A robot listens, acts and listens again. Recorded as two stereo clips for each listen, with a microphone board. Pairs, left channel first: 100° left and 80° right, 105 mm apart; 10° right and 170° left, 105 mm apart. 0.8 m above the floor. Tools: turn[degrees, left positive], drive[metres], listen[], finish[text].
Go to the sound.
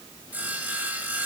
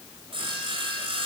Thought: The sawing: 155° right.
Action: turn[-155]
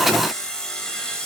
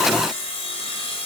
Thought: The sawing is now 15° left.
Action: turn[15]
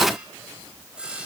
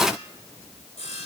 Action: drive[1.0]
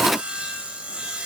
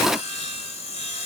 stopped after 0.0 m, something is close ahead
Action: finish[Blocked. The sawing is further on, straight ahead.]